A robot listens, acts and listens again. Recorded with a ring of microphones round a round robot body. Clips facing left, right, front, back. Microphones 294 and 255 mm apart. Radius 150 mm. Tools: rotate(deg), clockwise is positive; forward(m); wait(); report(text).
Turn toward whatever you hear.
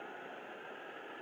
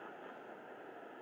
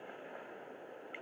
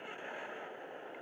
wait()
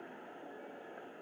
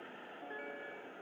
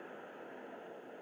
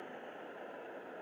wait()
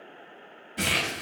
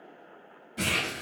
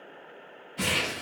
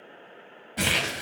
rotate(-175)
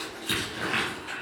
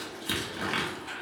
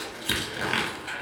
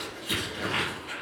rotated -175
rotate(15)
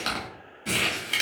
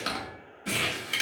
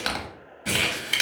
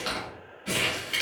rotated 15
report("Facing the crumpling.")